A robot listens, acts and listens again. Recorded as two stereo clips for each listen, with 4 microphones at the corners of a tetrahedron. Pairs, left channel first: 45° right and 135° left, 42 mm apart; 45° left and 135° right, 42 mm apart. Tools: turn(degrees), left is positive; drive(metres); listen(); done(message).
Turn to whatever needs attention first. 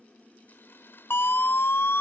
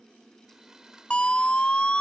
turn(degrees=-20)
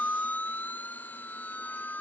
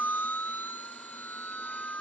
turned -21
done("Found it: a siren, straight ahead.")